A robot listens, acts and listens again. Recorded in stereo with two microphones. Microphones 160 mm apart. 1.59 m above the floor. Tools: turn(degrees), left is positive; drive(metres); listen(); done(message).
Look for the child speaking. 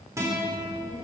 turn(degrees=45)
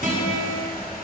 listen()
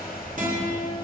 listen()
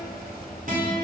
done("Found it: a child speaking, straight ahead.")